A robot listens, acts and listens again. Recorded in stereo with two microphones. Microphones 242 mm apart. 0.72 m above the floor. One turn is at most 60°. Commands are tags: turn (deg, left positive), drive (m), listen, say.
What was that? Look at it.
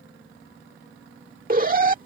<turn deg="-35"/>
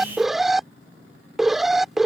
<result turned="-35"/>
<say>Facing the alarm.</say>